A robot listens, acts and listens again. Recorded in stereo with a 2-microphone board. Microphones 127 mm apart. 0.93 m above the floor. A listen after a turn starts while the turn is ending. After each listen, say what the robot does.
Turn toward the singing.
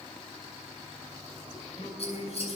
Turn 90° left.
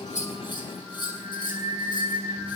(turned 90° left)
Found it: singing, straight ahead.